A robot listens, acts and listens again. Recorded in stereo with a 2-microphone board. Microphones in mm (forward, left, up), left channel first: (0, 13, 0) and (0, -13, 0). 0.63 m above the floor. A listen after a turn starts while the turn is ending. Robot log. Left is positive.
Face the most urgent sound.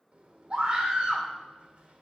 note: The scream: about 45° right or 135° right.
cmd yaw -45
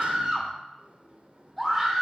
end: Found it: a scream, straight ahead, 2 to 4 m away.